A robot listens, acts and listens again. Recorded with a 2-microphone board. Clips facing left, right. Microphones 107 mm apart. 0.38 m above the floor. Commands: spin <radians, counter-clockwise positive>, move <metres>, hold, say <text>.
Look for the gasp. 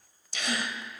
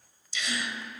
spin 0.96
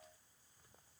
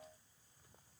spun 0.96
hold
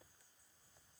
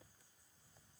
say I heard a gasp, but can't make it out now. It was about straight ahead or 70° left.